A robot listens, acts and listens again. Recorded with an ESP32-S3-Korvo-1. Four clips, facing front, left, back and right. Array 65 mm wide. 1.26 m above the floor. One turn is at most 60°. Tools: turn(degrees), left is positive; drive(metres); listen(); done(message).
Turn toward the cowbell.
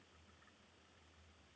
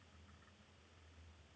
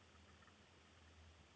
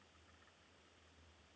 listen()
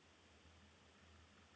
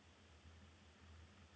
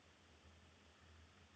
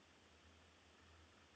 listen()
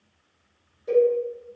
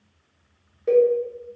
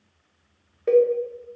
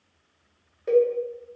turn(degrees=60)
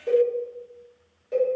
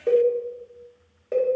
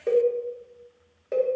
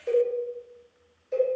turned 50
turn(degrees=60)
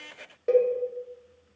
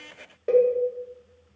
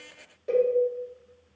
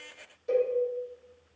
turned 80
turn(degrees=50)
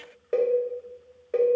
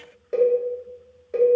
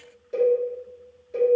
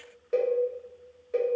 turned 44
done("Facing the cowbell.")